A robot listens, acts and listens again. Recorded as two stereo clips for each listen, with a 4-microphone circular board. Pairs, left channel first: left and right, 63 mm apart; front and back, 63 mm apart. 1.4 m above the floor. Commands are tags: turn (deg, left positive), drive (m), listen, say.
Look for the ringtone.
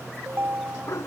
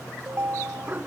<turn deg="-135"/>
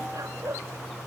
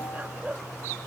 <listen/>
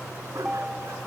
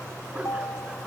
<turn deg="-10"/>
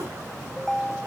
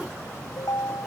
<say>Found it: a ringtone, straight ahead.</say>